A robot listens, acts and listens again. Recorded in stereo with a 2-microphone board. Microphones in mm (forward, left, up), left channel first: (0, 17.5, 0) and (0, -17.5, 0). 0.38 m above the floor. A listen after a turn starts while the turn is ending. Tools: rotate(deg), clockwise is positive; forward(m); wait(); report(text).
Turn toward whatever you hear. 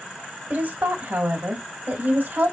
rotate(60)
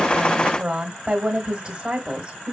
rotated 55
rotate(40)
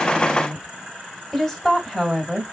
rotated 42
report("Facing the woman speaking, 1 to 2 m away.")